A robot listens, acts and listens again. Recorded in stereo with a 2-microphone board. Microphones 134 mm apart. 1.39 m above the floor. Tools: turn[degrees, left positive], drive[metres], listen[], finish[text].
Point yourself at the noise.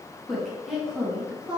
Action: turn[-30]
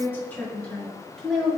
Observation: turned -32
Action: turn[30]
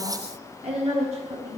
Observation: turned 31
Thought: So it is at 55° right.
Action: turn[-55]
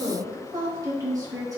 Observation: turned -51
Thought: The woman speaking is now 25° right.
Action: turn[-25]
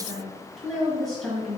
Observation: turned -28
Action: finish[Found it: a woman speaking, straight ahead.]